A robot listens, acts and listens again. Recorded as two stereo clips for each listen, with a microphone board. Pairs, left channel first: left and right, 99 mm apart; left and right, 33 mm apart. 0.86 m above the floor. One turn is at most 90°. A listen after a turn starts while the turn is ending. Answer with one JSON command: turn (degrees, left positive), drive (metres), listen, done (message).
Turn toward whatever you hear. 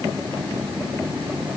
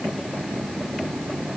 {"listen": true}
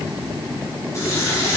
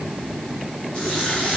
{"turn": 30}
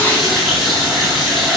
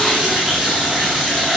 {"done": "Facing the running tap, over 4 m away."}